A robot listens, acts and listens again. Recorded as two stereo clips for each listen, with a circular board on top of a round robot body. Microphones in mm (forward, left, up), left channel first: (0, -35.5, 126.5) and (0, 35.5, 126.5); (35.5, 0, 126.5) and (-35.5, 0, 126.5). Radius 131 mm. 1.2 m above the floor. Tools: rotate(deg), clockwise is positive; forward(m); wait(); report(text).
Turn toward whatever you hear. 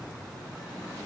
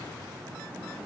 wait()
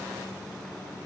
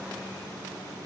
wait()
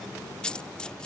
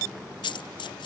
rotate(10)
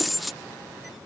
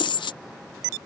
report("Facing the dropped coin.")